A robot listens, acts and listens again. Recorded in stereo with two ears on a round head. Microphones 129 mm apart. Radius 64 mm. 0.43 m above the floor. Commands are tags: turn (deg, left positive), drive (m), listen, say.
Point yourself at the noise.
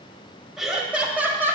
<turn deg="-20"/>
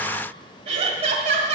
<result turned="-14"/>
<turn deg="-130"/>
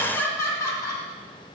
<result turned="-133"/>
<turn deg="20"/>
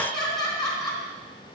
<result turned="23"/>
<say>Facing the laughter.</say>